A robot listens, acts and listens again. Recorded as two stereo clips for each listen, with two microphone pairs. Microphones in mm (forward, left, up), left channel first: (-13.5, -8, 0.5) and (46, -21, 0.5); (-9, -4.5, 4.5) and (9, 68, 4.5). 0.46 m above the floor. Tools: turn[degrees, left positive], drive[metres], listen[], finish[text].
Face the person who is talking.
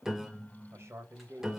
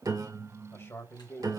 Thought: The man speaking: 50° right.
Action: turn[-50]
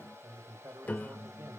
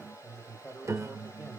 Thought: The man speaking is now 10° right.
Action: turn[-10]
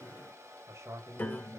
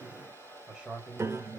Action: finish[Facing the man speaking.]